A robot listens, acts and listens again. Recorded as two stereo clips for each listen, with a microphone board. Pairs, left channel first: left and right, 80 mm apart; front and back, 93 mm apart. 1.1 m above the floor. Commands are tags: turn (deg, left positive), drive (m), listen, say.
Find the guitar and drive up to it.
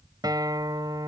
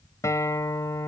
<turn deg="-55"/>
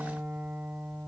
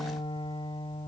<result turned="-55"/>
<turn deg="-20"/>
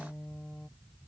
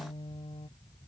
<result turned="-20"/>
<drive m="1.0"/>
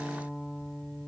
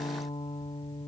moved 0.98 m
<drive m="1.0"/>
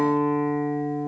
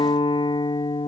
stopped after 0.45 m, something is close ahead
<say>Arrived at the guitar, straight ahead.</say>